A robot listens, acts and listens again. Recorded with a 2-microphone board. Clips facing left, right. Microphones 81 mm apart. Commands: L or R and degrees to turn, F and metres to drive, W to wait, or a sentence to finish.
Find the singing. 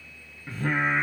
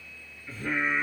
L70
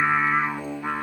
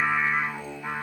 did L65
L45
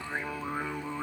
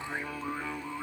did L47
L25
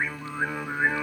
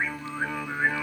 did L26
L20
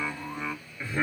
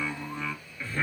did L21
L20
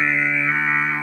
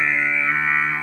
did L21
L10
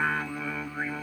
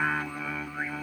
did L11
Found it: singing, straight ahead.